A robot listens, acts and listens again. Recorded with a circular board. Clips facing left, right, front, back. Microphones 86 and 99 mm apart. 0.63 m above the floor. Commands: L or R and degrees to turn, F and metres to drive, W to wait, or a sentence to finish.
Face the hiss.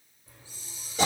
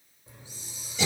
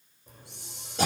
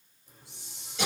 R20
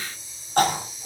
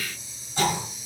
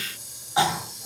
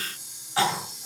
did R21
Found it: a hiss, straight ahead.